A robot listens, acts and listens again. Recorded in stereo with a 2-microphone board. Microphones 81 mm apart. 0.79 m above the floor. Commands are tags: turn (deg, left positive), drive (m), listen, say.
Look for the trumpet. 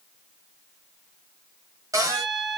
<turn deg="-90"/>
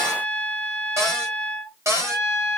<say>Found it: a trumpet, straight ahead, 2 to 4 m away.</say>